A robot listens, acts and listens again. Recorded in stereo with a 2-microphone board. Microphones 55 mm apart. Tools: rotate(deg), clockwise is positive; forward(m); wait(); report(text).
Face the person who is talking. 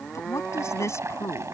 rotate(-60)
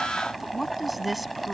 report("Facing the woman speaking.")